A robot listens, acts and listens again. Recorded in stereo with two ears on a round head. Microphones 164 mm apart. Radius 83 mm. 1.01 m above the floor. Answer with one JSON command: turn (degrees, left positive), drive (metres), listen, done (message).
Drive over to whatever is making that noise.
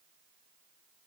{"listen": true}
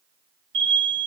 {"turn": -75}
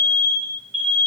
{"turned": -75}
{"drive": 1.0}
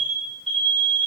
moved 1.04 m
{"drive": 1.0}
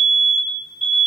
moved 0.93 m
{"drive": 1.0}
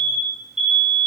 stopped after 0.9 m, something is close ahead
{"done": "I am next to the alarm."}